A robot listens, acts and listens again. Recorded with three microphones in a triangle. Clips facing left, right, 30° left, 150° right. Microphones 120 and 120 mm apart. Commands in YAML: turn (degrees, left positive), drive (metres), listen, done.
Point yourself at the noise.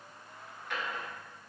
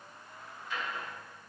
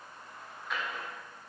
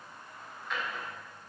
turn: 115
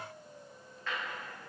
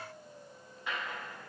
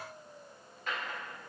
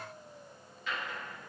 turn: -15
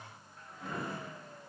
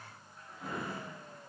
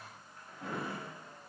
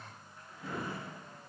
done: "Found it: a drawer, straight ahead, under 1 m away."